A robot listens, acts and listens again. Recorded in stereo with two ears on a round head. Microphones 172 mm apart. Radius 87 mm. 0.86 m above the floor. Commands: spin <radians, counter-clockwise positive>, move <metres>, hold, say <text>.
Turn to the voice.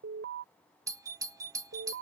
hold
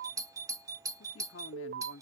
spin 1.22
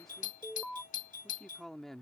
say Found it: a man speaking, straight ahead.